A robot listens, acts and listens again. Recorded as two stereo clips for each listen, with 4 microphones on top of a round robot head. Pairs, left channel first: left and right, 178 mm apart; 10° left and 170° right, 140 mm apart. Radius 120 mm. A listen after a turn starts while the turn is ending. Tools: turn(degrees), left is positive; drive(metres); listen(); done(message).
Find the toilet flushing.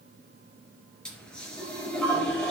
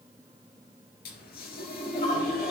done("Found it: a toilet flushing, straight ahead.")